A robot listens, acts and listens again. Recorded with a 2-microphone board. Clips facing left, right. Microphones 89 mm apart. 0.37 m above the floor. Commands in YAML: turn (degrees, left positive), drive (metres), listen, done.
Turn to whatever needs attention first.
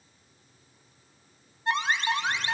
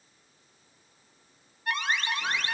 turn: 25
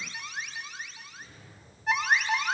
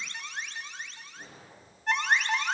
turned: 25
done: "Facing the alarm."